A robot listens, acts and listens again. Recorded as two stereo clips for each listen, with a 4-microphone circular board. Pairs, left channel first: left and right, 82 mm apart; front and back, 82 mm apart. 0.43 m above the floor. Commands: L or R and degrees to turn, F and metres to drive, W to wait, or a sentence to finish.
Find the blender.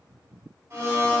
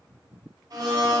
R150
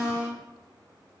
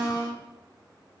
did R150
L25
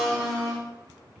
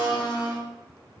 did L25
Found it: a blender, straight ahead, 1 to 2 m away.